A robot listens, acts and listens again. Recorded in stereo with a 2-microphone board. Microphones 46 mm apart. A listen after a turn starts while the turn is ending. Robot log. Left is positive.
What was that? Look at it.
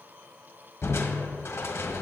note: The crushing: about 70° left or 110° left.
cmd yaw +70
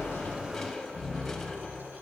end: Facing the crushing, 1 to 2 m away.